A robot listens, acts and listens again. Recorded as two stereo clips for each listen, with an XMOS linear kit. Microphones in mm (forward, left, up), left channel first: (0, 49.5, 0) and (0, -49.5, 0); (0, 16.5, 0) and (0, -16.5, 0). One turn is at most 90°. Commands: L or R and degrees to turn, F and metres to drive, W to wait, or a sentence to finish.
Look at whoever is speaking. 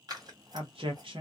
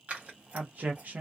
R65
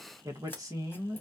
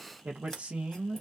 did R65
R40
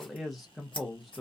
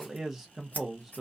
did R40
Facing the man speaking, under 1 m away.